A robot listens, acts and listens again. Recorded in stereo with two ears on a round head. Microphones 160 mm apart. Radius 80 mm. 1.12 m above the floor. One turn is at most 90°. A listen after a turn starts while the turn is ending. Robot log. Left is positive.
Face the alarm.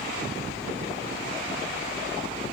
cmd idle
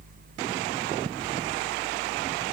cmd idle
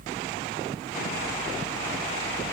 end: I can't make out an alarm to turn to.